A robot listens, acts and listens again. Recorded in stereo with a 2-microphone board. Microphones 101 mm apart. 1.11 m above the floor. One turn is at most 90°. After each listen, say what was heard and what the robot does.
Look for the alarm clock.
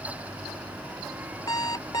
The alarm clock: about 40° left or 140° left. Turn 40° left.
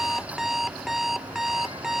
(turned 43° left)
Found it: an alarm clock, straight ahead.